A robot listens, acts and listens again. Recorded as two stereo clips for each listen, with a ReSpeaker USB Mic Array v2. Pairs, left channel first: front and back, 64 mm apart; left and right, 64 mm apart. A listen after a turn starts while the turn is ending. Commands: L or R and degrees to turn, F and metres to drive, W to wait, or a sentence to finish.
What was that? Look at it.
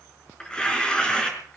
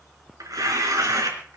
R75
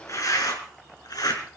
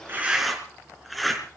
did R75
Facing the tearing paper.